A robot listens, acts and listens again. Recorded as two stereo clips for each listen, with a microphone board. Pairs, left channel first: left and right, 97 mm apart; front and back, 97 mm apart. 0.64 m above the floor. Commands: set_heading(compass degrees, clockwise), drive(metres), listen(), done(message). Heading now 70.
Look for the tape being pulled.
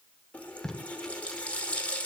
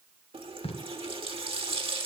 done("Found it: tape being pulled, straight ahead.")